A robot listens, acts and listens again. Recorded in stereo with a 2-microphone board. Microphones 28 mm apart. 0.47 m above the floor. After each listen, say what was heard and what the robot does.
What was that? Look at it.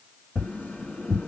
Turn 90° left.
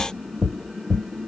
So it is at 10° left. Turn 10° left.
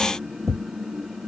Facing the tapping, 1 to 2 m away.